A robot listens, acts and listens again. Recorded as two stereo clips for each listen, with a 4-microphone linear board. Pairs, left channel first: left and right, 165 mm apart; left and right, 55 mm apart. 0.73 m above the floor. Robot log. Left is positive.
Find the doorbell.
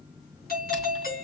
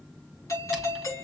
note: The doorbell: about 65° left or 115° left.
cmd yaw +65
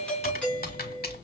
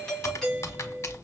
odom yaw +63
note: So it is at 10° left.
cmd yaw +10
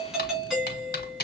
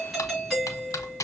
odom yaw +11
end: Found it: a doorbell, straight ahead.